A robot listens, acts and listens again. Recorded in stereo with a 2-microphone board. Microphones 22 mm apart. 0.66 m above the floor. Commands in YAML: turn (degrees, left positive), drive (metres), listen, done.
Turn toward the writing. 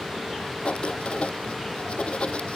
turn: 60
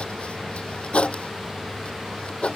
turn: 65
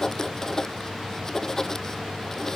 turn: 25
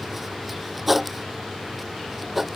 turn: -10
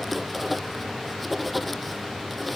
done: "Found it: writing, straight ahead."